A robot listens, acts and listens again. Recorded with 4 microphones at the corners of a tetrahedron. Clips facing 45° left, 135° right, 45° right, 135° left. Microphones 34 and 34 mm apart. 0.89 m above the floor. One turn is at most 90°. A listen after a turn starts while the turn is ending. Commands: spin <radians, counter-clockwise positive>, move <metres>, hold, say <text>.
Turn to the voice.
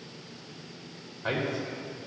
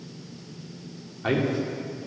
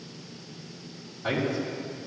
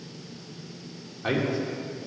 spin -1.57
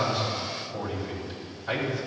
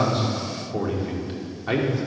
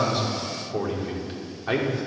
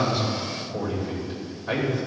spin -1.48
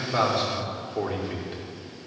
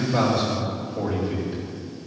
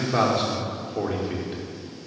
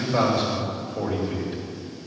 spin 0.17
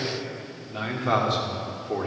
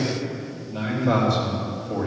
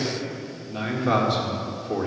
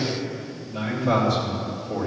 say Found it: a man speaking, straight ahead.